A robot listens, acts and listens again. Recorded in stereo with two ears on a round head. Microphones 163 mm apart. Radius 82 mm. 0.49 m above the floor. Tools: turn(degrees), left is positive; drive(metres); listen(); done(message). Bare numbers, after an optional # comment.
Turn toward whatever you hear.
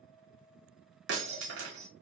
# The breaking glass: about 65° right or 115° right.
turn(-65)
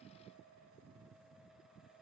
listen()
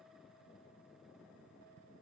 done("I heard breaking glass, but can't make it out now. It was about straight ahead or 50° right.")